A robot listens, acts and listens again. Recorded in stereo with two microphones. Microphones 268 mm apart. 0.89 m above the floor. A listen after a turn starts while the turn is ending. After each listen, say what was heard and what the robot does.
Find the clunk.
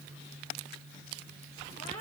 Keep listening.
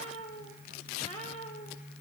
Keep listening.
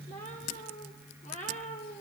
I can't make out a clunk, only a cat meowing.